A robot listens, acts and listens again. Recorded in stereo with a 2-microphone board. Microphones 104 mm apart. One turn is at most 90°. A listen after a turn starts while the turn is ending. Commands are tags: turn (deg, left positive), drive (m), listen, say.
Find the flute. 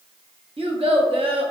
<listen/>
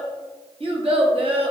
<listen/>
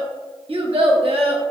<say>I can't make out a flute, only a child speaking.</say>